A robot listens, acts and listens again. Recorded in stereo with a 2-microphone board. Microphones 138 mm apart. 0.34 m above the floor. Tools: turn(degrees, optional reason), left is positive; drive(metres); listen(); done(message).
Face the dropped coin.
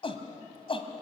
listen()
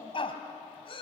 listen()
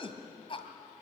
done("I can't make out a dropped coin to turn to.")